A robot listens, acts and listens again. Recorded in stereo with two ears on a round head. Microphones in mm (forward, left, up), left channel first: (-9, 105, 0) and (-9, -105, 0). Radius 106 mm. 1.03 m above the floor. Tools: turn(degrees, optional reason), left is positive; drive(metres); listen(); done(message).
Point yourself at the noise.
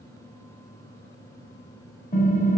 turn(degrees=30, reason="The typing on a keyboard: about 30° left or 150° left.")
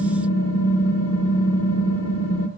turn(degrees=115, reason="So it is at 115° left.")
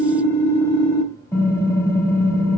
turn(degrees=10, reason="The typing on a keyboard is now 10° left.")
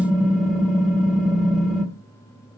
done("Facing the typing on a keyboard, 1 to 2 m away.")